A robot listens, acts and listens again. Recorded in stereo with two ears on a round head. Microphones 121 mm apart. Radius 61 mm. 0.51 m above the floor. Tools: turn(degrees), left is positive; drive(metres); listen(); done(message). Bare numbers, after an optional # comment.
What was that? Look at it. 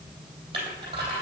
# The crushing: about 35° right or 145° right.
turn(-35)
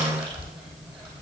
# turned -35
done("Facing the crushing.")